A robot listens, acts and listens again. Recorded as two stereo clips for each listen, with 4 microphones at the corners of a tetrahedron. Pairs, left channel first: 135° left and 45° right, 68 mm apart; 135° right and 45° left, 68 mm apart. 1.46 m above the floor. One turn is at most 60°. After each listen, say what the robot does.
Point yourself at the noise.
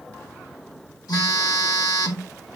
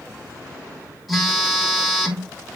Turn 60° left.
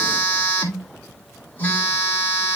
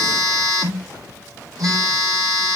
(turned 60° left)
Turn 60° left.
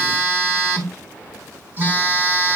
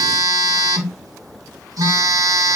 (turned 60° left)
Turn 15° left.
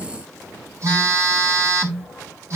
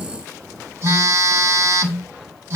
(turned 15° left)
Facing the phone buzzing.